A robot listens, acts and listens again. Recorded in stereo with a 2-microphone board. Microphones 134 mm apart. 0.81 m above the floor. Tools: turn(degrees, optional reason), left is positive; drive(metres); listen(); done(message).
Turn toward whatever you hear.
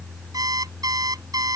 turn(degrees=-30, reason="The alarm clock: about 30° right or 150° right.")
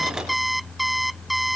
done("Found it: an alarm clock, straight ahead.")